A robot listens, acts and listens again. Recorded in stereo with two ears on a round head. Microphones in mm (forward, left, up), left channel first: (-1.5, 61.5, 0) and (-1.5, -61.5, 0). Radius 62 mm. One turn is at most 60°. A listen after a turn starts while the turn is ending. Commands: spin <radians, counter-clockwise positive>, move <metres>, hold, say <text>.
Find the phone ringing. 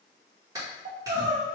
hold
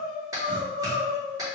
hold
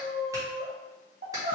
say I can't make out a phone ringing to turn to.